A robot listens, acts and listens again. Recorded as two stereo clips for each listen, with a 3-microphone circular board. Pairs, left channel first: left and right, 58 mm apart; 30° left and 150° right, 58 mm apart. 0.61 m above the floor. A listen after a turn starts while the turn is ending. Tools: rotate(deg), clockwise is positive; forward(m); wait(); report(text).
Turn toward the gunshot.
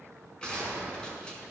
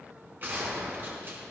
rotate(-160)
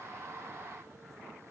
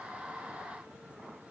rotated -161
report("Facing where the gunshot came from. I can't hear it now.")